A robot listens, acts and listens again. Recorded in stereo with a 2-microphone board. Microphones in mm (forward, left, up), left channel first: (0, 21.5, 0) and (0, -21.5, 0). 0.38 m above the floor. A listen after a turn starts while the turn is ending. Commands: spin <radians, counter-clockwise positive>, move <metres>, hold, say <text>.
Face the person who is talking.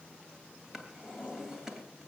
hold
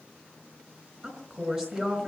spin -0.44
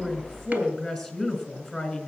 say Facing the woman speaking.